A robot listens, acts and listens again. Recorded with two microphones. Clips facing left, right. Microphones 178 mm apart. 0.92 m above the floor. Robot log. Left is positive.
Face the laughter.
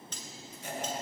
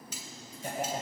note: The laughter: about 50° right or 130° right.
cmd yaw -50
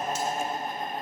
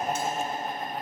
note: So it is at 85° right.
cmd yaw -85
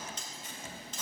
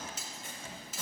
cmd idle
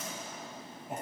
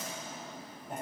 end: Found it: laughter, straight ahead.